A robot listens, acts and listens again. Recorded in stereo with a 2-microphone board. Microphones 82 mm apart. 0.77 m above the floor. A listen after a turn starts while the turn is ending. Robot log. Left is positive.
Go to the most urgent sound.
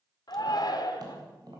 note: The shout: about 55° left or 125° left.
cmd yaw +55
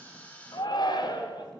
note: So it is at 65° left.
cmd yaw +65
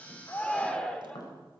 note: The shout is now 10° left.
cmd yaw +10
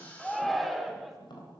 cmd fwd 1.0
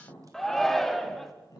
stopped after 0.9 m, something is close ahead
end: I am next to the shout.